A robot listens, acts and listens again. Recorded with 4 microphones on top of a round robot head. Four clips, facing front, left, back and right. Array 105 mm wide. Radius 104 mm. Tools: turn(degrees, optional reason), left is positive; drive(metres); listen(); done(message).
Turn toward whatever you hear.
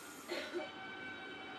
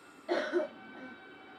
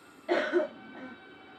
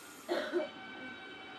turn(degrees=170, reason="The cough: 170° left.")
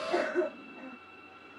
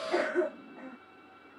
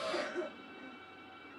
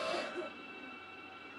turn(degrees=50, reason="The cough is now 50° left.")
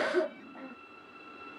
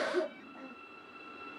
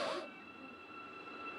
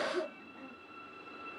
turn(degrees=20, reason="The cough is now 20° left.")
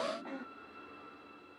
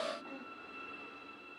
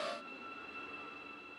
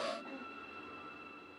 listen()
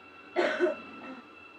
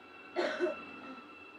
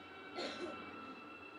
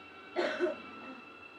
done("Facing the cough.")